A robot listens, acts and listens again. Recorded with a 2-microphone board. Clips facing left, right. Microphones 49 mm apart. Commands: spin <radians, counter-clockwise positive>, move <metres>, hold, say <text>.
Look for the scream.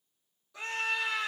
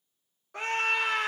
spin -0.96
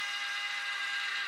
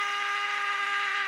spin -1.05
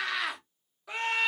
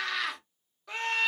say Found it: a scream, straight ahead, 1 to 2 m away.